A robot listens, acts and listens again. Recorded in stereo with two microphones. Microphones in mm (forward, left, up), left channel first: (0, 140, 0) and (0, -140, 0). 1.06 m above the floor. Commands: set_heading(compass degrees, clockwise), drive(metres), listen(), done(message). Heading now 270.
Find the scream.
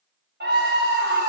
set_heading(305)
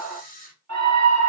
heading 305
set_heading(50)
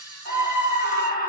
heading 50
set_heading(20)
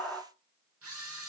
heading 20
done("Found it: a scream, straight ahead.")